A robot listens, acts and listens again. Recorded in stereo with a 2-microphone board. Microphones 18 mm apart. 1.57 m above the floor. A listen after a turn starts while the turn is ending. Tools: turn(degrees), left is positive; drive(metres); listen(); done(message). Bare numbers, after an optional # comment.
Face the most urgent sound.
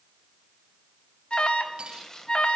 # The alarm: about 55° left or 125° left.
turn(55)
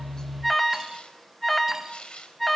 # So it is at 10° left.
turn(10)
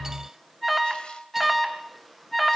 done("Facing the alarm, 2 to 4 m away.")